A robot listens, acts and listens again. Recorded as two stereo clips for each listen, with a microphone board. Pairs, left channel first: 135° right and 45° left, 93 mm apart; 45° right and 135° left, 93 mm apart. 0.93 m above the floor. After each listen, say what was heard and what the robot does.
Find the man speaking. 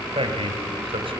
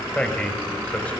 The man speaking: 30° left. Turn 30° left.
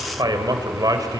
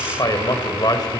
Facing the man speaking.